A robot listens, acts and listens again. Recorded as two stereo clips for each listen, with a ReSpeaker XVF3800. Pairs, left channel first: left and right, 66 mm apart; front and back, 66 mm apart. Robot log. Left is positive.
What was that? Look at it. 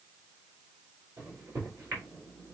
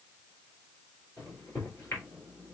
note: The microwave: 55° right.
cmd yaw -55
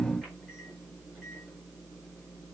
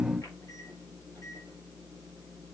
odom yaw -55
end: Facing the microwave.